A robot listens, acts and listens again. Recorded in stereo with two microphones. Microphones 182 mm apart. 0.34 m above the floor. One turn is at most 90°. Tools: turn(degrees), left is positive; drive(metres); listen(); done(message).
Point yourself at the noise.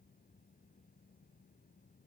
listen()
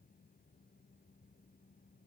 listen()
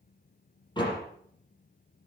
turn(degrees=25)
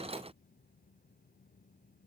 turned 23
listen()
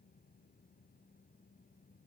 done("I heard a door slam, but can't make it out now. It was about straight ahead or 135° left.")